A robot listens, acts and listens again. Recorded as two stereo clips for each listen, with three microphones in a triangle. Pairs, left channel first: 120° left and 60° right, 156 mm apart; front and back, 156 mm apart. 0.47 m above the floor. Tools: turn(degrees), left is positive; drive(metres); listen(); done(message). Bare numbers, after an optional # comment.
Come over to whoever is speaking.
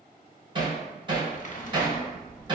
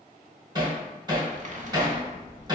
# The child speaking: 150° right.
turn(-150)
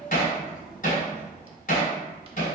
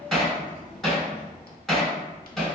# The child speaking is now 55° left.
turn(55)
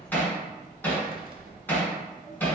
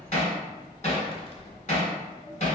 drive(1.0)
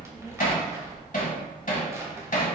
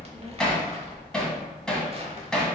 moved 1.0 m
# The child speaking is now 15° left.
turn(15)
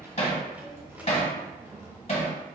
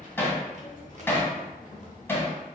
drive(1.0)
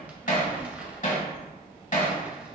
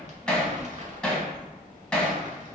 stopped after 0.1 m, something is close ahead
# The child speaking is now 10° left.
turn(10)
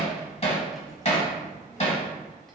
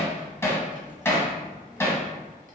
done("Arrived at the child speaking, straight ahead.")